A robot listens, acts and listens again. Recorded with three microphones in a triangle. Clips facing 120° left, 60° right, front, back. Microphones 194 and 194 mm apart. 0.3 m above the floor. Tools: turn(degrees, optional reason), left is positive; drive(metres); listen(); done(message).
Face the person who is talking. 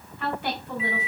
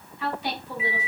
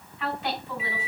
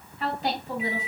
turn(degrees=135, reason="The woman speaking: 135° left.")
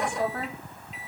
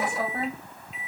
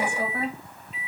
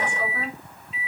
done("Found it: a woman speaking, straight ahead.")